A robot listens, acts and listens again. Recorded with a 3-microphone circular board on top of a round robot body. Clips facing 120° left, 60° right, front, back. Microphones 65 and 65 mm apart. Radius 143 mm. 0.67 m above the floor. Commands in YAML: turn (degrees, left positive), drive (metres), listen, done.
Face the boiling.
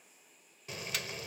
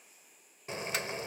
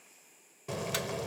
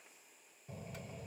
done: "Facing the boiling."